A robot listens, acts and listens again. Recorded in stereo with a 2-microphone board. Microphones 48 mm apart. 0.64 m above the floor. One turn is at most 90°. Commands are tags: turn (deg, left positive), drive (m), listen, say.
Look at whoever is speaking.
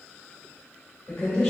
<turn deg="20"/>
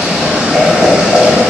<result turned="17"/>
<listen/>
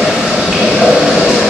<listen/>
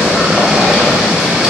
<say>I heard a woman speaking, but can't make it out now. It was about 5° left or 140° left.</say>